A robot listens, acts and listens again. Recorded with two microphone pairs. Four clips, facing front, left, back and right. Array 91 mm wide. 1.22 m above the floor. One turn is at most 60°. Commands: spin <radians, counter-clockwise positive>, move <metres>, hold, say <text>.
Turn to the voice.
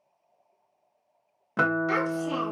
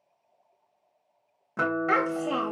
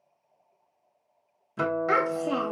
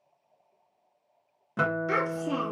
spin 1.05
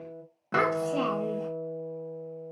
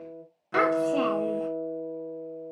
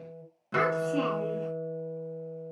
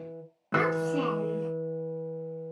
spin 0.96
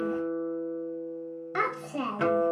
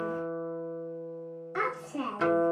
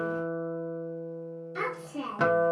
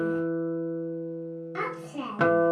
spin 0.17
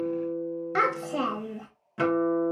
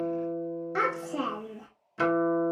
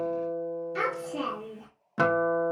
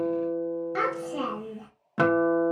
say Found it: a child speaking, straight ahead.